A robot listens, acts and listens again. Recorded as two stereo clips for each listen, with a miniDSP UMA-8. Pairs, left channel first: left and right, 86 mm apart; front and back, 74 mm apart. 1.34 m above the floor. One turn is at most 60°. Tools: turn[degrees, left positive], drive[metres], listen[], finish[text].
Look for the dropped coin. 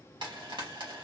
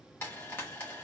Action: listen[]
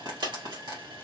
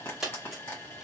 Thought: The dropped coin: 95° right.
Action: turn[-60]
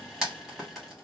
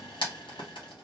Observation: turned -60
Thought: Nothing new. It was at 35° right.
Action: turn[-35]
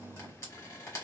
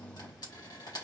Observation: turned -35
Action: finish[I heard a dropped coin from this way, but can't make it out now.]